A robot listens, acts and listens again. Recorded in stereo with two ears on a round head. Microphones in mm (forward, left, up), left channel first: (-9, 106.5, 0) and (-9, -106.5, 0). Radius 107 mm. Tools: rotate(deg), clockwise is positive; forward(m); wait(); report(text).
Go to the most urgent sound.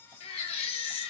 rotate(-25)
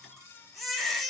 forward(1.0)
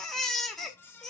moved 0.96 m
forward(1.0)
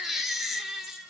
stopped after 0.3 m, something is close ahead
report("Arrived at the baby crying, straight ahead.")